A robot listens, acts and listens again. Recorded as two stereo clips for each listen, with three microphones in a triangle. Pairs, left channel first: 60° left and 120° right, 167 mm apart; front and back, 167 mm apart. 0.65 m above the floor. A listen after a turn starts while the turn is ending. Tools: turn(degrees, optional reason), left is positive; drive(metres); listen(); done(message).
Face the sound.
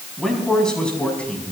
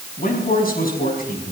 turn(degrees=-25, reason="The man speaking: 25° right.")
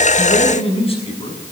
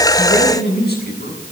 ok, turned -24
turn(degrees=10, reason="The man speaking is now 10° left.")
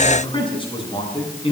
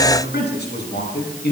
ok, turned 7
done("Found it: a man speaking, straight ahead, over 4 m away.")